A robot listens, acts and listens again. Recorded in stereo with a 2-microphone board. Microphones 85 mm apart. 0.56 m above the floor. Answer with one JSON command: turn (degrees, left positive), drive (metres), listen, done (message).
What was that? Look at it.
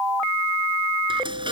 {"turn": -75}
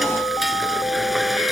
{"done": "Facing the frying."}